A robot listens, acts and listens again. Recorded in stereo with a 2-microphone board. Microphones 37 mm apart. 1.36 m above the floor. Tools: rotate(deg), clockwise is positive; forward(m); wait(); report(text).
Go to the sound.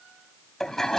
rotate(-30)
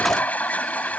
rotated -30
rotate(-135)
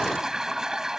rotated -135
rotate(15)
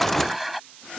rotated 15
forward(1.0)
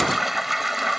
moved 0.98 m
forward(1.0)
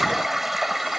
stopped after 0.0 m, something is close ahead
report("Blocked. The toilet flushing is further on, straight ahead.")